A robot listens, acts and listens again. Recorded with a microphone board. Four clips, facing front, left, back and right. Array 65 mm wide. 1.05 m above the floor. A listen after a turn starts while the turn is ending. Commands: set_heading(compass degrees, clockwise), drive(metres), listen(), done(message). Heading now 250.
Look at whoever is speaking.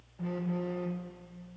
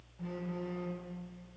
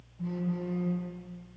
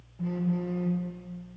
listen()
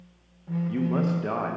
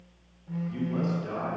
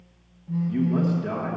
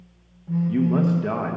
set_heading(305)
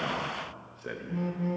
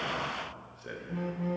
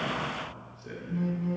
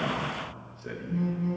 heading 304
done("Facing the man speaking, under 1 m away.")